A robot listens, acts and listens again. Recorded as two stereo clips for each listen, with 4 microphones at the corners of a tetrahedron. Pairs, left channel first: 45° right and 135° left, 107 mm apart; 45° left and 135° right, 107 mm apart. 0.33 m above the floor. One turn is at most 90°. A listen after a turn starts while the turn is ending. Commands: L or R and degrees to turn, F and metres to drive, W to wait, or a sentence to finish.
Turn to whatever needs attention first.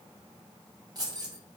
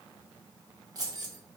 W
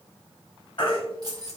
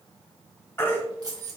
R20
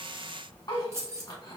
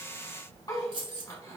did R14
Facing the baby crying, 1 to 2 m away.